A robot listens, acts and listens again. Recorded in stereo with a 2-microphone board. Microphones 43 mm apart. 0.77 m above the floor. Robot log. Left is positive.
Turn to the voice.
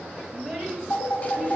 cmd yaw -30
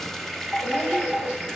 cmd idle
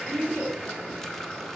note: So it is at 25° left.
cmd yaw +25
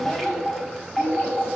note: The child speaking is now 25° left.
cmd yaw +25
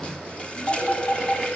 cmd idle
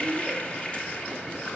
cmd idle
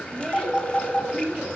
note: The child speaking is now 10° left.
cmd yaw +10
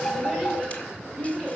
end: Found it: a child speaking, straight ahead, over 4 m away.